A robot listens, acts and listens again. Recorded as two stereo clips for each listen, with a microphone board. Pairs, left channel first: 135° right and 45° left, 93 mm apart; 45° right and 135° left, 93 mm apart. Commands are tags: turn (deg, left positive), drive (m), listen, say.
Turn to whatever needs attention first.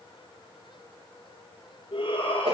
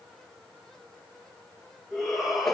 <turn deg="-135"/>
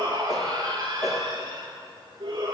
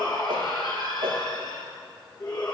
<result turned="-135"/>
<say>Facing the shout, over 4 m away.</say>